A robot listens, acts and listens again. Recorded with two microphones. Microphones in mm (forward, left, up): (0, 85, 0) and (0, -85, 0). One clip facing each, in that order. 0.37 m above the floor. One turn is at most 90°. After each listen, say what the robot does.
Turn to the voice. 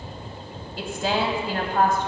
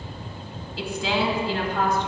Turn 55° left.
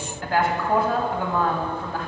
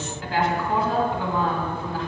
Turn 65° left.
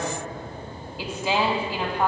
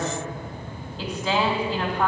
Turn 10° left.
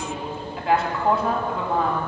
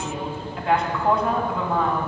Found it: a woman speaking, straight ahead, 2 to 4 m away.